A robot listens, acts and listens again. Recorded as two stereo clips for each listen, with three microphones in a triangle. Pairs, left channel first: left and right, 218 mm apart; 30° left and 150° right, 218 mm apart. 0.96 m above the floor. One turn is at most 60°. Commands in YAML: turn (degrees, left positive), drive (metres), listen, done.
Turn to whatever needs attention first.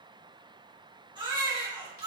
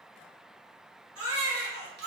turn: -60
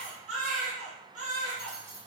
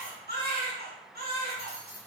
turn: -60
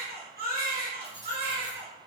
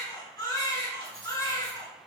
turn: -45
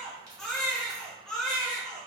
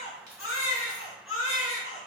done: "Facing the baby crying, 1 to 2 m away."